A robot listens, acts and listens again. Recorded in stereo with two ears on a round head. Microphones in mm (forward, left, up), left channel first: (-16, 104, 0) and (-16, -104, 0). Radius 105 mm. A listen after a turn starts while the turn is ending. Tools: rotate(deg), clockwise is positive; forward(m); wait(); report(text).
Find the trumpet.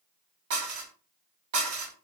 wait()
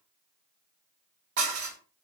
wait()
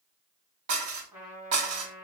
rotate(30)
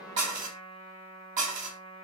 rotate(-25)
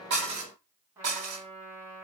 rotate(10)
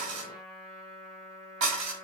report("Found it: a trumpet, straight ahead, 1 to 2 m away.")